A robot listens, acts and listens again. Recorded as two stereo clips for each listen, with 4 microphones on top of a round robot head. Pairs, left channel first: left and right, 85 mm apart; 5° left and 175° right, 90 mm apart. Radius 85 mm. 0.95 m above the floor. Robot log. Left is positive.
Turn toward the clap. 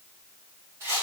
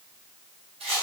cmd idle
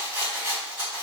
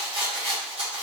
cmd idle
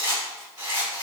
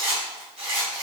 end: I can't make out a clap to turn to.